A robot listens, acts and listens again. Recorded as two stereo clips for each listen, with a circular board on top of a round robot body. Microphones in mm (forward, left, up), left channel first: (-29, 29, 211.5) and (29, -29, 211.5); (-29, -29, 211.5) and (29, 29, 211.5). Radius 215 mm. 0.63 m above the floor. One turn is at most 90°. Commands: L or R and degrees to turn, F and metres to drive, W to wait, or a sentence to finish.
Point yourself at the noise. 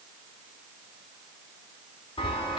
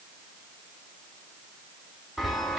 L90
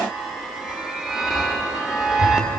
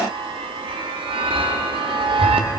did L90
L40
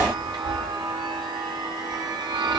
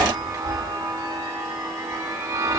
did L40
R10
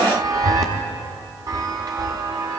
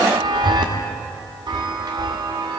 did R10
Facing the chime, under 1 m away.